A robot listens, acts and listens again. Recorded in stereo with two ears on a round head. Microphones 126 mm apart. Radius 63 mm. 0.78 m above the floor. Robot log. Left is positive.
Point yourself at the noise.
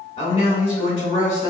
note: The man speaking: about 45° left or 135° left.
cmd yaw +45
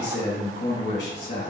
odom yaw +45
note: So it is at 75° left.
cmd yaw +75
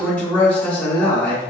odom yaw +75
note: The man speaking is now 10° left.
cmd yaw +10
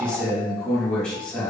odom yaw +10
end: Facing the man speaking, 1 to 2 m away.